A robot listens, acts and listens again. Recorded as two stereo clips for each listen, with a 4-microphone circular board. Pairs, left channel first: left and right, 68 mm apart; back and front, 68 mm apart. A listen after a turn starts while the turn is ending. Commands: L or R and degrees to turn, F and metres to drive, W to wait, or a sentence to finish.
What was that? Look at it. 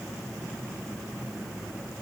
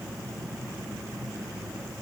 W
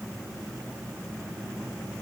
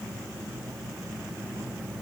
W
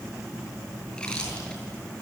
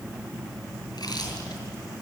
L170
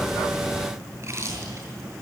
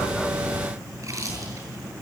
R40
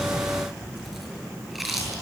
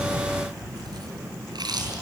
Found it: chewing, straight ahead.